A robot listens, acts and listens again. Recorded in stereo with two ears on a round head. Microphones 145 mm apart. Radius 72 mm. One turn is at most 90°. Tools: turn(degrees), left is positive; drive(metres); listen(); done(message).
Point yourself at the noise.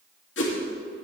turn(degrees=90)
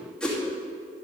done("Facing the whoosh, 2 to 4 m away.")